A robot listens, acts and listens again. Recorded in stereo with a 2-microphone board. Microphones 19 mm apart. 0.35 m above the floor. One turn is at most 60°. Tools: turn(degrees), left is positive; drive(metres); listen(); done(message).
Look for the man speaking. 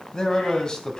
turn(degrees=40)
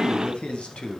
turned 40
turn(degrees=60)
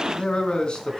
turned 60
turn(degrees=50)
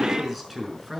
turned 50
turn(degrees=-10)
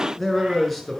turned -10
done("Found it: a man speaking, straight ahead.")